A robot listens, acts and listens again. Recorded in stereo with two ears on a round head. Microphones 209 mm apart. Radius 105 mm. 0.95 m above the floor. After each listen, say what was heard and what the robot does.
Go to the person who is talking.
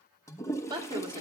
The woman speaking: about 20° right or 160° right. Turn 20° right.
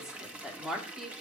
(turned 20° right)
Drive 1.0 m forward.
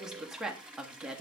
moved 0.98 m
Drive 1.0 m forward.
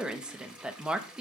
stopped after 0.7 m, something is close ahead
I am next to the woman speaking.